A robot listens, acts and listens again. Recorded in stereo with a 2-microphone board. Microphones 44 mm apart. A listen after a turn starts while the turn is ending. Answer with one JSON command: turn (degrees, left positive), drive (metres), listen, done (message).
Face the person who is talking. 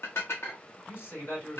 {"turn": 60}
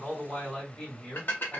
{"turn": 20}
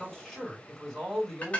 {"done": "Facing the man speaking, 2 to 4 m away."}